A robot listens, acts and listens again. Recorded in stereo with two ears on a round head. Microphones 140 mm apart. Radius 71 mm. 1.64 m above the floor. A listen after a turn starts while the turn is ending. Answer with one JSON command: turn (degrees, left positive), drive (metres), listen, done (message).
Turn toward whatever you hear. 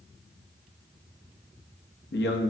{"turn": 70}
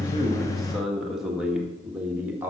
{"turn": -10}
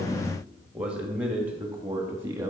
{"turn": -15}
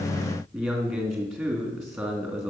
{"done": "Found it: a man speaking, straight ahead, 2 to 4 m away."}